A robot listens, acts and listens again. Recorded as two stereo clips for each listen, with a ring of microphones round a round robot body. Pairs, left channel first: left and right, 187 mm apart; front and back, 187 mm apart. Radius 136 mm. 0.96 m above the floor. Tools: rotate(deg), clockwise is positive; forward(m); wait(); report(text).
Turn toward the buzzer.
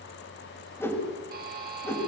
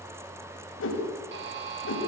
rotate(140)
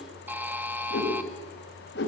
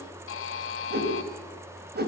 rotate(10)
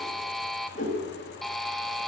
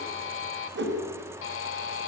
report("Found it: a buzzer, straight ahead, 2 to 4 m away.")